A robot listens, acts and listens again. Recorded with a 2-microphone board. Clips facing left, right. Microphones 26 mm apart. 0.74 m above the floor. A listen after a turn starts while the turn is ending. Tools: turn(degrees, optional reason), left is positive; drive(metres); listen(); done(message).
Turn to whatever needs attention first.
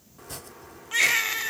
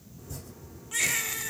turn(degrees=30, reason="The baby crying: about 30° left or 150° left.")
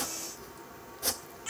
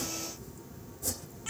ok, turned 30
done("Found it: a baby crying, straight ahead.")